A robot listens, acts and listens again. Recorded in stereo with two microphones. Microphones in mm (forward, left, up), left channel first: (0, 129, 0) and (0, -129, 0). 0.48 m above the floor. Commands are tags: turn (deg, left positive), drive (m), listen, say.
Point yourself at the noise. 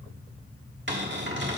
<turn deg="-45"/>
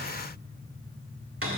<turn deg="-80"/>
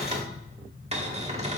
<turn deg="-30"/>
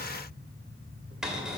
<say>Found it: a cupboard door, straight ahead.</say>